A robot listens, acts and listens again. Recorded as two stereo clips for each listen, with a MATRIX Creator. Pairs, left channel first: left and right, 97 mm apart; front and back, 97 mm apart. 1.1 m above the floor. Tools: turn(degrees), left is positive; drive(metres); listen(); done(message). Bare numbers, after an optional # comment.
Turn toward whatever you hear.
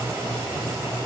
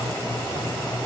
listen()
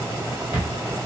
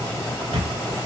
# The camera shutter: 155° right.
turn(-155)
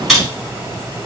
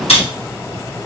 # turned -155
done("Found it: a camera shutter, straight ahead, 1 to 2 m away.")